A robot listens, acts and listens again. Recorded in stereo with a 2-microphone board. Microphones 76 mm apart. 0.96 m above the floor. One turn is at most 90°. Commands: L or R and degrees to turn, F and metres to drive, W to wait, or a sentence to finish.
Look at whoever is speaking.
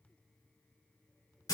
W
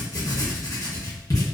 W
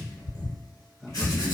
R30
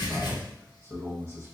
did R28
R90
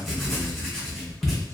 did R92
R50
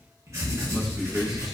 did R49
Found it: a man speaking, straight ahead, under 1 m away.